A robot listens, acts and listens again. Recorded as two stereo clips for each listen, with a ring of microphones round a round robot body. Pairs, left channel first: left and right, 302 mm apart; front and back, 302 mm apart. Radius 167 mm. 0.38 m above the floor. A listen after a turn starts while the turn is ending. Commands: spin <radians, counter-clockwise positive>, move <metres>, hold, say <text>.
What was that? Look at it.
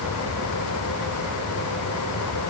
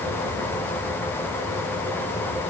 hold
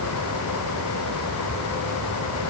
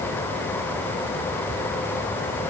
hold
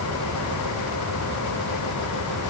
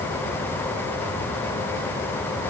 say I can't make out anything to turn to.